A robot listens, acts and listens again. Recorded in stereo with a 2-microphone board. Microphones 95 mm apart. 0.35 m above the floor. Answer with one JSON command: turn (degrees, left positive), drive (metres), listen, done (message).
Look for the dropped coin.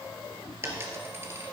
{"turn": -25}
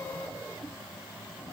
{"listen": true}
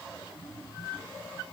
{"done": "I heard a dropped coin, but can't make it out now. It was about straight ahead or 130° right."}